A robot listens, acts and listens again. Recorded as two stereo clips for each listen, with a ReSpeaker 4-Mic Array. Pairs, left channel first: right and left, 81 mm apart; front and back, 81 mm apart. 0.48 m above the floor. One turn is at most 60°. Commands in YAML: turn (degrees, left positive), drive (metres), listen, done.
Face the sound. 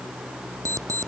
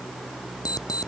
turn: 40
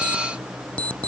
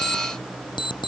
turn: -15
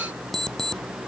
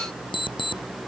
done: "Found it: an alarm clock, straight ahead."